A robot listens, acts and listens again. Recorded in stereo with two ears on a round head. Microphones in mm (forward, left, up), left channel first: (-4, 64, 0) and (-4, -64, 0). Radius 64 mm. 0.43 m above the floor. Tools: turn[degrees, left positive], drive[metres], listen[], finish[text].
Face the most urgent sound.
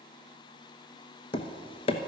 Action: listen[]
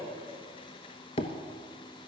Action: listen[]
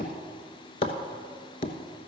Action: finish[I can't make out anything urgent to turn to.]